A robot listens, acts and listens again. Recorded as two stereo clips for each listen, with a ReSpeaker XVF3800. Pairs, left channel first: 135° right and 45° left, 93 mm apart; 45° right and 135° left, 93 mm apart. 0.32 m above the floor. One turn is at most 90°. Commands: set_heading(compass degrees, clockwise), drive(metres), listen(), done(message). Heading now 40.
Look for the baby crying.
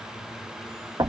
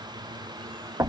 listen()
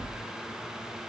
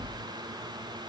listen()
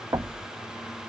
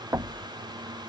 done("I can't make out a baby crying, only knocking.")